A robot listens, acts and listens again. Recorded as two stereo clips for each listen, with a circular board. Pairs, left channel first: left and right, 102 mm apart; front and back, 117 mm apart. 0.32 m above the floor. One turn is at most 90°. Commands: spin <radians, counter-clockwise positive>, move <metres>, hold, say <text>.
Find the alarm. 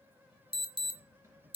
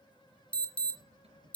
spin -1.40
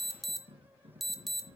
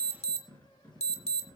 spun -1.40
say Facing the alarm.